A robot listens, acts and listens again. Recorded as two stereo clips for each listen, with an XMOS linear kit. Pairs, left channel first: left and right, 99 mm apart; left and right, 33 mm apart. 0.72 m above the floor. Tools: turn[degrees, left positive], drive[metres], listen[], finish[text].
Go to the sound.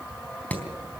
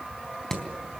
Action: turn[30]
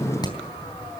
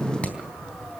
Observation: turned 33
Thought: So it is at 135° left.
Action: turn[135]
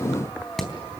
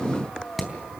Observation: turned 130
Action: drive[1.0]
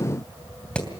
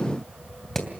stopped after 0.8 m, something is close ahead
Thought: The hammering is now 10° left.
Action: turn[10]
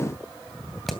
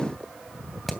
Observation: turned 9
Action: finish[Something is in my way. I am facing the hammering but have not reached it.]